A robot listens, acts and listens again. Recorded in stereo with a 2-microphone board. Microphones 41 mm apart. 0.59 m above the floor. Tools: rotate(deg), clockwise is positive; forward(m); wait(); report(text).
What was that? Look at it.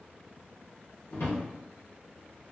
rotate(-75)
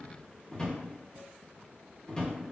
rotate(-20)
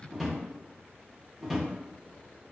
report("Found it: a drawer, straight ahead.")